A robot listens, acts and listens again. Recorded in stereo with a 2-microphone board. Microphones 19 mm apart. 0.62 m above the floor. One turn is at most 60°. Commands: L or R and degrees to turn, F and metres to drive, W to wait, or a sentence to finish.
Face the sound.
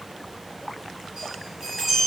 R40
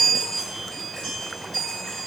Facing the chime, 2 to 4 m away.